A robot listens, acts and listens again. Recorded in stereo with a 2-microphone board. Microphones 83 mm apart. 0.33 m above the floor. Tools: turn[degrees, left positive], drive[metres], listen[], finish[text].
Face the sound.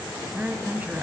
Thought: The woman speaking: about 25° right or 155° right.
Action: turn[-25]
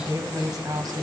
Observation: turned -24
Thought: So it is at 125° right.
Action: turn[-125]
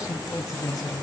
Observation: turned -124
Thought: The woman speaking is now 50° left.
Action: turn[50]
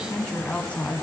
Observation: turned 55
Thought: The woman speaking is now 20° left.
Action: turn[20]
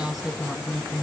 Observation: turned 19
Action: finish[Facing the woman speaking.]